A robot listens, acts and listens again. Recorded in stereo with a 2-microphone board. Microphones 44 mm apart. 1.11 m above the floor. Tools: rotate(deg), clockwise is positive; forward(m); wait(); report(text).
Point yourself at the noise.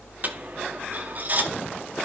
rotate(40)
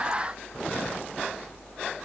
wait()
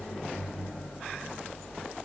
report("I heard a dropped coin, but can't make it out now. It was about straight ahead or 100° right.")